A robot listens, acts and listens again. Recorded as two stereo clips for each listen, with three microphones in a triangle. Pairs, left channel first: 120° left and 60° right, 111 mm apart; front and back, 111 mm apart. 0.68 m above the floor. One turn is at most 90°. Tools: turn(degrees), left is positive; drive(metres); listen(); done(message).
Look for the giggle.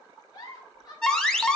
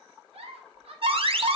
turn(degrees=90)
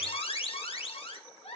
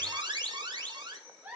turn(degrees=90)
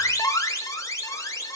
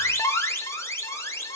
turn(degrees=15)
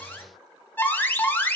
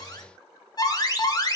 listen()
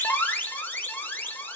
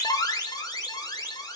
done("I heard a giggle from this way, but can't make it out now.")